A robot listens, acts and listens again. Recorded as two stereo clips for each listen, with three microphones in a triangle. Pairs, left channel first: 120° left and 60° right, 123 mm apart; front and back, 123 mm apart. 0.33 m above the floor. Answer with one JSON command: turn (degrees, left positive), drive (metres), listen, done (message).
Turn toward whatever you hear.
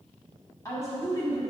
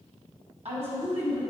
{"turn": -175}
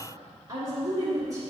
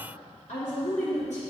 {"done": "Facing the woman speaking, 2 to 4 m away."}